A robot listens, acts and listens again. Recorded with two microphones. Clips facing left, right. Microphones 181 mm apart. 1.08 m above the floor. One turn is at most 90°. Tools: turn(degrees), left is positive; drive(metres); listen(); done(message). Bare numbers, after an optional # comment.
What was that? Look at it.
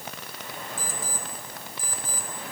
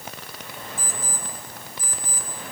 # The alarm clock: about 30° left or 150° left.
turn(30)
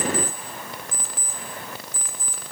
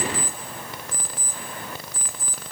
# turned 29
done("Found it: an alarm clock, straight ahead, 2 to 4 m away.")